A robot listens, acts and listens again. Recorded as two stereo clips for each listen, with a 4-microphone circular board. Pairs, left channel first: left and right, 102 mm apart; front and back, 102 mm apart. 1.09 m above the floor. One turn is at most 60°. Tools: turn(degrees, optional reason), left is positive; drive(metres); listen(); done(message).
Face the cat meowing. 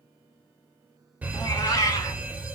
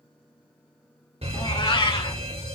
turn(degrees=35, reason="The cat meowing: 35° left.")
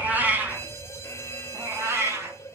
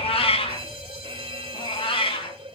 turn(degrees=-30, reason="The cat meowing is now 30° right.")
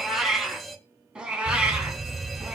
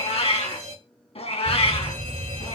turn(degrees=-10, reason="The cat meowing is now 10° right.")
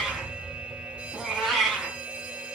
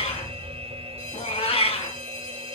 done("Found it: a cat meowing, straight ahead.")